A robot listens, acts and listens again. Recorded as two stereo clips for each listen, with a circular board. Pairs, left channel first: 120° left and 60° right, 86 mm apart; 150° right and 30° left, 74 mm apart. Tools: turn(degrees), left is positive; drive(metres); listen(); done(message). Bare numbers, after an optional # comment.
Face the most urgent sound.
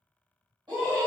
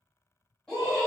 # The scream: 70° right.
turn(-70)
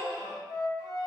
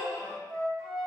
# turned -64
done("Facing the scream, 1 to 2 m away.")